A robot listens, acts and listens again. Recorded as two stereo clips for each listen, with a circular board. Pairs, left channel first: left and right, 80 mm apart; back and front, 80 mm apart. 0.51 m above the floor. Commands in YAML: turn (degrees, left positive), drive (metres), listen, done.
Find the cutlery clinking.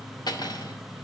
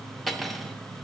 turn: 90
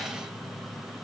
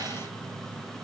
listen: true
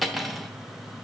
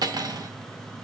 done: "Found it: cutlery clinking, straight ahead, under 1 m away."